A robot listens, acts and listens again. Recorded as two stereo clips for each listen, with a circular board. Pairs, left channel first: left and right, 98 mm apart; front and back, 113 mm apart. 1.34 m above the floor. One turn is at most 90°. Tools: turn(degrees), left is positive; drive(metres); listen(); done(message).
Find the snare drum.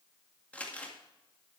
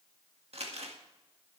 listen()
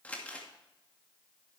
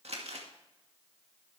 listen()
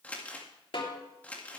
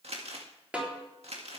turn(degrees=90)
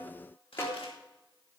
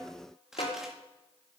turn(degrees=30)
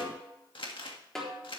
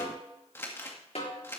done("Found it: a snare drum, straight ahead, 2 to 4 m away.")